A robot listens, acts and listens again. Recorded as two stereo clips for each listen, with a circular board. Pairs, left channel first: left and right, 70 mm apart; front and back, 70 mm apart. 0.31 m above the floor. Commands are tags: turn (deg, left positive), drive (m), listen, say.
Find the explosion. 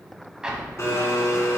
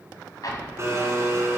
<turn deg="-10"/>
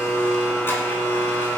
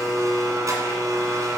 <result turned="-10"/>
<say>I heard an explosion from this way, but can't make it out now.</say>